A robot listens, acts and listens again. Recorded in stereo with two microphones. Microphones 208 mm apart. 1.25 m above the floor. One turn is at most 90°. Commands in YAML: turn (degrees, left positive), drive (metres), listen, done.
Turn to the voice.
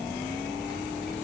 listen: true
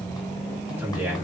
turn: -30
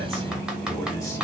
listen: true
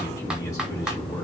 listen: true
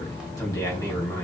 turn: 15
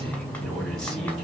done: "Facing the man speaking."